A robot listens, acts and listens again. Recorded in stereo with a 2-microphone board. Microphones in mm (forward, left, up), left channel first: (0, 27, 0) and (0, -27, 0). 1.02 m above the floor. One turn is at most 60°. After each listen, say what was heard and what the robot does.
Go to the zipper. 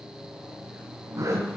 The zipper: about 75° right or 105° right. Turn 60° right.
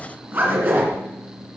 So it is at 40° right. Turn 40° right.
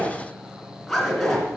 Drive 1.0 m forward.
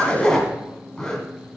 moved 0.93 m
The zipper is now 10° left. Turn 10° left.
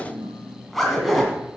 Drive 1.0 m forward.
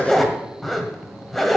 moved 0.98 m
Drive 1.0 m forward.
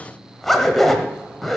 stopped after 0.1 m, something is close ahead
I am next to the zipper.